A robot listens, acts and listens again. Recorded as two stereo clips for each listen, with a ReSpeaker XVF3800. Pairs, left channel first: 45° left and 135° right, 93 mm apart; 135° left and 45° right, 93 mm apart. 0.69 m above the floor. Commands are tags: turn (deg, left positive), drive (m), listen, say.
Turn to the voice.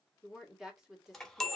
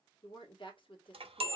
<turn deg="140"/>
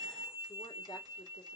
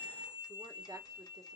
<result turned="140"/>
<listen/>
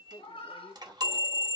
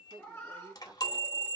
<say>Found it: a woman speaking, straight ahead, 1 to 2 m away.</say>